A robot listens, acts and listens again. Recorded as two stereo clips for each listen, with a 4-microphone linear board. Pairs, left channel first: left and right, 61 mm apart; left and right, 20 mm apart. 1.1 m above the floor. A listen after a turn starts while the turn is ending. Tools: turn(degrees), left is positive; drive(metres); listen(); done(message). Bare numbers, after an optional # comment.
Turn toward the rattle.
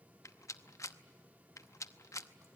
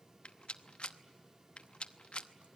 # The rattle: about 60° left or 120° left.
turn(60)
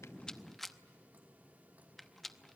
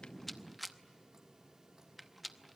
done("Facing the rattle.")